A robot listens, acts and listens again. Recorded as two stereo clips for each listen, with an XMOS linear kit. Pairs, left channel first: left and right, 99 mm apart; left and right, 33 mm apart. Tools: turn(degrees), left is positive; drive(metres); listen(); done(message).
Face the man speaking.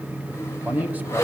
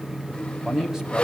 turn(degrees=-15)
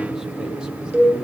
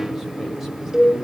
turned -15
listen()
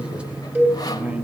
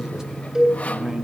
turn(degrees=-15)
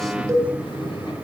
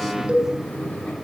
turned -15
listen()
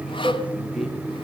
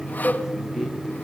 listen()
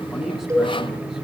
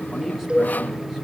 done("I heard a man speaking, but can't make it out now. It was about straight ahead or 150° right.")